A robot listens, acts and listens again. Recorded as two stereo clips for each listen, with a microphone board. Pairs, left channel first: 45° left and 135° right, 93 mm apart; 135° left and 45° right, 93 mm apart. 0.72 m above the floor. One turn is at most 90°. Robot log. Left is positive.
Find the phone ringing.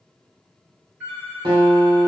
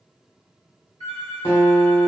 note: The phone ringing: 150° left.
cmd yaw +90
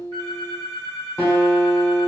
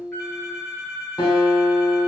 note: The phone ringing is now 65° left.
cmd yaw +65
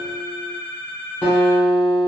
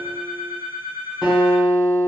end: Found it: a phone ringing, straight ahead, 1 to 2 m away.